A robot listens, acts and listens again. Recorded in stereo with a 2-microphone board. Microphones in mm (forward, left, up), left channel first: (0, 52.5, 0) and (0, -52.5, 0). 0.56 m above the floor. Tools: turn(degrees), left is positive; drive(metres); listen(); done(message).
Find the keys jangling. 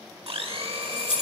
turn(degrees=60)
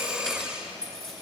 done("Found it: keys jangling, straight ahead.")